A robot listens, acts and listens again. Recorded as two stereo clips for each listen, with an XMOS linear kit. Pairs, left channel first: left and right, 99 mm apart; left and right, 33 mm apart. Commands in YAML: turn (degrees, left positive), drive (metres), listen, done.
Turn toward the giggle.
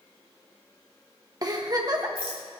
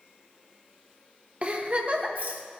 turn: -40
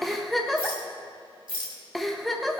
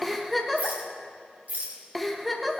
done: "Facing the giggle."